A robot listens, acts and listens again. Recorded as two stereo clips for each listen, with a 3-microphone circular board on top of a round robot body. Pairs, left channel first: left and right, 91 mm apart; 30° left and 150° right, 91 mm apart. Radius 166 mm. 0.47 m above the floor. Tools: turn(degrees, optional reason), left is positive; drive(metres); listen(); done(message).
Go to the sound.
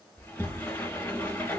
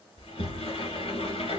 turn(degrees=20, reason="The sliding door: 20° left.")
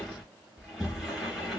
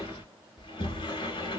drive(metres=1.0)
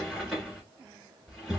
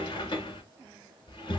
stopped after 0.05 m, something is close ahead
done("Blocked. The sliding door is further on, straight ahead.")